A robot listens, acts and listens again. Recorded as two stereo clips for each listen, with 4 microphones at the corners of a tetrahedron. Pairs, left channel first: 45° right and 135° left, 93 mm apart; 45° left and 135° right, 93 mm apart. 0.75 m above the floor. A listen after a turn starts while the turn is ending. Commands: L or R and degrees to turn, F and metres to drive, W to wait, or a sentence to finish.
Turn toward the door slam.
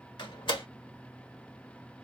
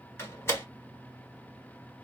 R20
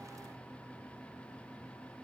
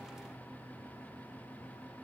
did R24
I heard a door slam from this way, but can't make it out now.